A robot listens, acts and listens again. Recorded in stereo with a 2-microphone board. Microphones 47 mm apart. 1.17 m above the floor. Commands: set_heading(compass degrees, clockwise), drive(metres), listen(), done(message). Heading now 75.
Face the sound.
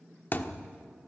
set_heading(35)
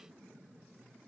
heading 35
listen()
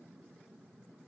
done("I heard a thud, but can't make it out now. It was about straight ahead or 100° left.")